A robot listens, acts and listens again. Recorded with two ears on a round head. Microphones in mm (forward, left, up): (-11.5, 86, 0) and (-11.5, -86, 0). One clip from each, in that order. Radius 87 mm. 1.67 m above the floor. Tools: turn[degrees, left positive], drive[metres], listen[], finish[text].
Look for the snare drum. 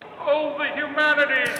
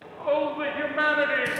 Action: listen[]
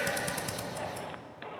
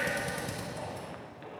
Action: listen[]
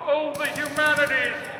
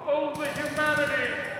Action: finish[I can't make out a snare drum, only a shout and a drill.]